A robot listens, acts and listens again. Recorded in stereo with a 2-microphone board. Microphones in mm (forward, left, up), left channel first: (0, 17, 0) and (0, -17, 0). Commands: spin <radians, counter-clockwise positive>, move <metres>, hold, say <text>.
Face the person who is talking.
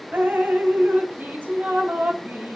hold
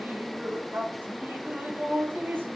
hold
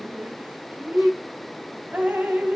say I can't make out anyone speaking, only dripping.